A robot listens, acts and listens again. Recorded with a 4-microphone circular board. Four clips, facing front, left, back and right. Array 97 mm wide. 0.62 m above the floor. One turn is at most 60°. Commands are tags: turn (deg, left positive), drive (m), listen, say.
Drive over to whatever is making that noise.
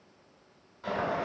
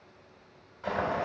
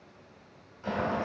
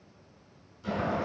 <turn deg="60"/>
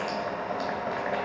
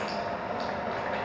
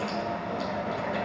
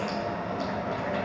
<turn deg="25"/>
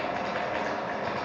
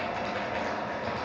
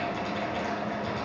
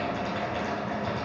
<turn deg="15"/>
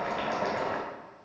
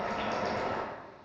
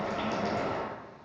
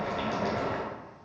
<drive m="1.0"/>
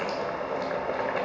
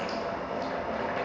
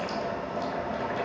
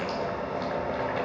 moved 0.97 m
<drive m="1.0"/>
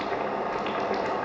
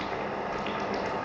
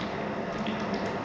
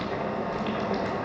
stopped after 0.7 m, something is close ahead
<say>I am next to the boiling.</say>